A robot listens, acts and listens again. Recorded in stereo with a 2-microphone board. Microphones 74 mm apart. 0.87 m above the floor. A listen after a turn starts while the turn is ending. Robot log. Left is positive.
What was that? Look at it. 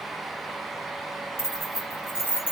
note: The keys jangling: about 30° left or 150° left.
cmd yaw +30
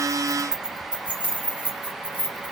note: So it is at 25° right.
cmd yaw -25
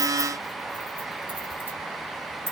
note: The keys jangling is now 30° right.
cmd yaw -30
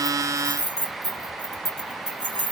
end: Facing the keys jangling, 1 to 2 m away.